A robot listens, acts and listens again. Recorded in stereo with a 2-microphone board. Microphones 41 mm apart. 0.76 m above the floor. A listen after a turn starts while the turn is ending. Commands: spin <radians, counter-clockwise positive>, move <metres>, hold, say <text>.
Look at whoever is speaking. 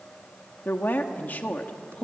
spin 0.61
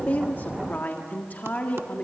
spin 0.79
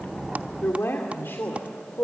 spin 1.92
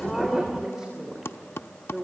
spin -0.26
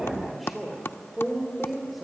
say Found it: a woman speaking, straight ahead.